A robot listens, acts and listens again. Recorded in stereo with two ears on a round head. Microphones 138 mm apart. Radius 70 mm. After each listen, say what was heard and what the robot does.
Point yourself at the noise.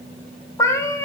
The cat meowing: about 20° left or 160° left. Turn 20° left.
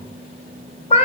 So it is at 140° left. Turn 140° left.
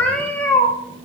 The cat meowing is now 10° left. Turn 10° left.
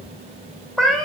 Facing the cat meowing, 1 to 2 m away.